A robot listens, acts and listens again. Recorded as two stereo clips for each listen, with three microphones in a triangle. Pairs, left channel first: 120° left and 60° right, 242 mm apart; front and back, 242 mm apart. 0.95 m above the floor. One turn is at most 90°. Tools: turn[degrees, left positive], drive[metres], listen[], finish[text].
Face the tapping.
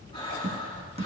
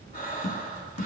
Action: finish[Found it: tapping, straight ahead, 1 to 2 m away.]